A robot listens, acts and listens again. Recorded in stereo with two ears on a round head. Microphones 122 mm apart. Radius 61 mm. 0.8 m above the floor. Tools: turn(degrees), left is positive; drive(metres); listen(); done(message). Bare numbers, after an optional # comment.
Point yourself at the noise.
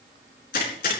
# The gunshot: about 70° left or 110° left.
turn(70)
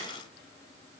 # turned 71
listen()
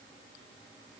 done("I heard a gunshot, but can't make it out now. It was about straight ahead or 35° left.")